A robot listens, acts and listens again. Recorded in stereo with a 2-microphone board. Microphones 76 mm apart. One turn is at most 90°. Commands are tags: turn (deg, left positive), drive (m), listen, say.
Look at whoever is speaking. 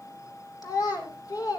<turn deg="60"/>
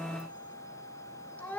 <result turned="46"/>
<turn deg="20"/>
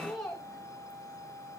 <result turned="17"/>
<say>Found it: a child speaking, straight ahead, 2 to 4 m away.</say>